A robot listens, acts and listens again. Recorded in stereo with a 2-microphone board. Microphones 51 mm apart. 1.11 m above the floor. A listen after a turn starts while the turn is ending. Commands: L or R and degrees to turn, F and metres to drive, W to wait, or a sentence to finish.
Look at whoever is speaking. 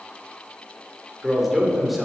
R30
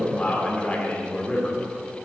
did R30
L30
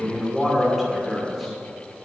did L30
Found it: a man speaking, straight ahead.